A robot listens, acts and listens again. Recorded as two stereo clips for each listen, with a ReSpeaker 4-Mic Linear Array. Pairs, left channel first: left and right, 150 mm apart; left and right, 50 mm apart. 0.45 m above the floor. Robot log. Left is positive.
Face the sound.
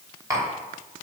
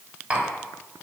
note: The tapping: about 20° right or 160° right.
cmd yaw -20
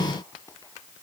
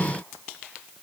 end: Found it: tapping, straight ahead, 2 to 4 m away.